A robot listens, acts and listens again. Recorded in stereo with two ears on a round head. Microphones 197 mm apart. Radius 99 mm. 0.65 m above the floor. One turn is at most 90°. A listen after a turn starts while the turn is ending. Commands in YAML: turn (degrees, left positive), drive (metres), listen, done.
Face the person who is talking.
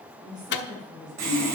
turn: -20
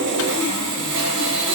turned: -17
listen: true
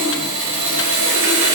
listen: true
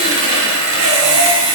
done: "I heard a woman speaking, but can't make it out now. It was about 5° right or 145° right."